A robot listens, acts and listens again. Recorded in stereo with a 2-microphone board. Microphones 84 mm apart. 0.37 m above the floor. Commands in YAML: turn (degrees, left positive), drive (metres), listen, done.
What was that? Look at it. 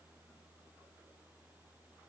listen: true
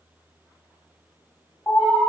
turn: 40
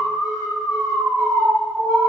done: "Facing the alarm."